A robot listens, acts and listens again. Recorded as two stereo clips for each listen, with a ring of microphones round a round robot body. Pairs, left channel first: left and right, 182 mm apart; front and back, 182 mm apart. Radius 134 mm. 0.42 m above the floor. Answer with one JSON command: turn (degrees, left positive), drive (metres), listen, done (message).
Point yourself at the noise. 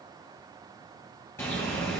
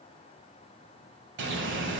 {"turn": 170}
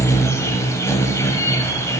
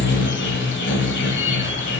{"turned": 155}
{"turn": 15}
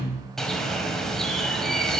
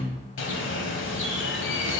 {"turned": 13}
{"done": "Found it: a bird, straight ahead, 1 to 2 m away."}